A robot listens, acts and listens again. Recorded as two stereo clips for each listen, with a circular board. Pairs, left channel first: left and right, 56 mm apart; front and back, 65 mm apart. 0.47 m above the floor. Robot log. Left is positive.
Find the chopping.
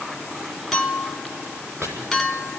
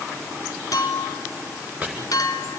note: The chopping: 110° right.
cmd yaw -110
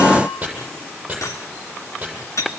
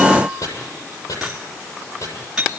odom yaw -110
note: The chopping is now 20° right.
cmd yaw -20
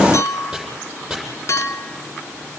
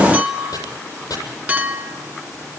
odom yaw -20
end: Facing the chopping.